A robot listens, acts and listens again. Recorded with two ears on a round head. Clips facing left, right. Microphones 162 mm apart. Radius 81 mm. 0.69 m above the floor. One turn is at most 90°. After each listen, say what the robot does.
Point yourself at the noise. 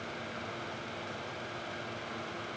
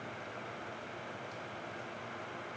Keep listening.
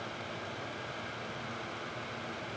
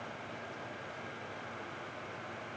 Keep listening.
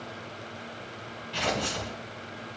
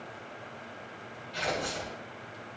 Turn 90° left.
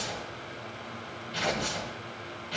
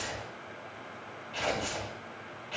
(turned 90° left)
Turn 10° left.
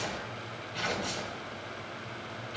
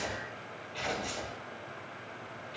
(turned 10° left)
Found it: tearing paper, straight ahead.